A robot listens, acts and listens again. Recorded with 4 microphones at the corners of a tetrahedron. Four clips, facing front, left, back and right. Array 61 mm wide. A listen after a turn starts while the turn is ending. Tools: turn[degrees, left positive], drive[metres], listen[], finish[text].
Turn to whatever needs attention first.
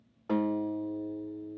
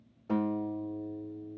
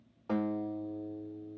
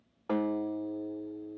Action: listen[]
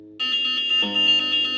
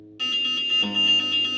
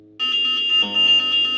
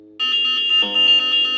Thought: The alarm: 120° right.
Action: turn[-120]
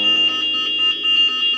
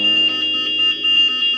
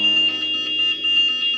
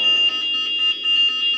Thought: The alarm is now 15° left.
Action: turn[15]
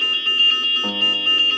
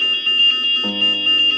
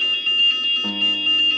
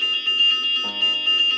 Action: finish[Facing the alarm, 1 to 2 m away.]